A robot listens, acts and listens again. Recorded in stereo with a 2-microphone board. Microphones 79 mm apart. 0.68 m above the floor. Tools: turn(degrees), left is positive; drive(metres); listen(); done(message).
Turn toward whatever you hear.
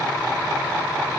listen()
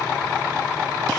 listen()
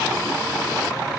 done("I can't make out anything.")